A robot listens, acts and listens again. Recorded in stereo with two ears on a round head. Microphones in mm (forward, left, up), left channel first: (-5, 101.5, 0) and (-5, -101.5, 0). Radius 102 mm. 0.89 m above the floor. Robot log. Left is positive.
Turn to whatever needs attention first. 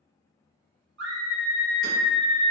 note: The scream: about 50° right or 130° right.
cmd yaw -50
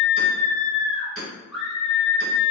end: Facing the scream, 1 to 2 m away.